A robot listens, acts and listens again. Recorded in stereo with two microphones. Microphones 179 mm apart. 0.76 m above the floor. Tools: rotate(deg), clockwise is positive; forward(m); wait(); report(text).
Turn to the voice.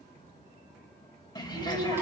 rotate(90)
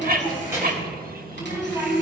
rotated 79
rotate(20)
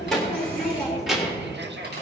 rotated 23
report("Found it: a child speaking, straight ahead, 1 to 2 m away.")